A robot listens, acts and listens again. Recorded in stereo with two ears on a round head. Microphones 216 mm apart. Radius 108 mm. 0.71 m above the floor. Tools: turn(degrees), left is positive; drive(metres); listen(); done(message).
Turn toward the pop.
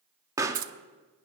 turn(degrees=-30)
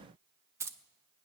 listen()
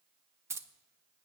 done("I heard a pop, but can't make it out now. It was about 15° left or 135° right.")